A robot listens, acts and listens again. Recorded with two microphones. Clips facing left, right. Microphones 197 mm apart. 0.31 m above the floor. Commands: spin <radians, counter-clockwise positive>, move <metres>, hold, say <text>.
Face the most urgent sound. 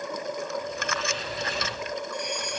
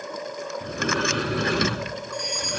spin 1.05
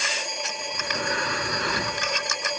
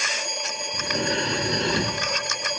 say Facing the fire alarm.